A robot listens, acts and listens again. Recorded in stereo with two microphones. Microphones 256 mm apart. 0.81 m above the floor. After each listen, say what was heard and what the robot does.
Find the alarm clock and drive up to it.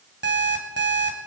The alarm clock: about 45° right or 135° right. Turn 45° right.
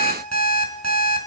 So it is at 90° right. Turn 90° right.
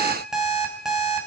Drive 1.0 m forward.
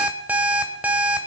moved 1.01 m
Drive 1.0 m forward.
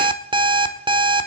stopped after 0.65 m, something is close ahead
The alarm clock is now 20° right. Turn 20° right.
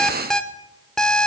I am next to the alarm clock.